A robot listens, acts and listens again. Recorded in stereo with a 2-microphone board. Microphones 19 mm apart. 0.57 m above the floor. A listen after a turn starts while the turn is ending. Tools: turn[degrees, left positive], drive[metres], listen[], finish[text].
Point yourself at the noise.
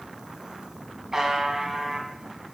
Thought: The buzzer: about 25° right or 155° right.
Action: turn[-25]
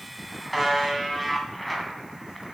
Action: finish[Found it: a buzzer, straight ahead, 2 to 4 m away.]